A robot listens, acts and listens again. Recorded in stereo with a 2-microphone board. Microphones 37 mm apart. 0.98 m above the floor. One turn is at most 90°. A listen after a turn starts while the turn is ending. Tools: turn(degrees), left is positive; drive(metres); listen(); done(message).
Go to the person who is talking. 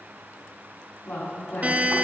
turn(degrees=70)
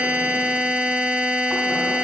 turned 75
listen()
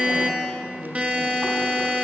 turn(degrees=25)
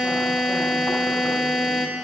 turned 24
listen()
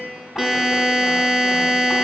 listen()
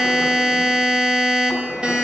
done("Facing where the woman speaking came from. I can't hear it now. I did not reach it.")